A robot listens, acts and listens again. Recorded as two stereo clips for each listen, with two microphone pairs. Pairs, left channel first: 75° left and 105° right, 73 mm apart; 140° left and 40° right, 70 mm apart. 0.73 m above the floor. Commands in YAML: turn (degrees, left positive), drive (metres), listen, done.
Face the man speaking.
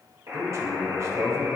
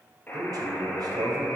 turn: -55
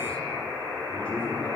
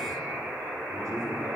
done: "Facing the man speaking."